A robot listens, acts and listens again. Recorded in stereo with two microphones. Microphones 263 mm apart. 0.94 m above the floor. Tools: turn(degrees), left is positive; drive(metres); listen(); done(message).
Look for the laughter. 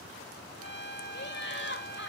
turn(degrees=45)
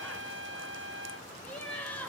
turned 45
done("Facing the laughter.")